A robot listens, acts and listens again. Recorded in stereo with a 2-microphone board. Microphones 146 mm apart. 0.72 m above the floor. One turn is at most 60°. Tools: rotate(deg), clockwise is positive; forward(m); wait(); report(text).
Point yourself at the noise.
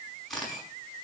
rotate(-30)
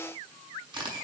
rotate(30)
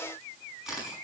report("Facing the camera shutter, over 4 m away.")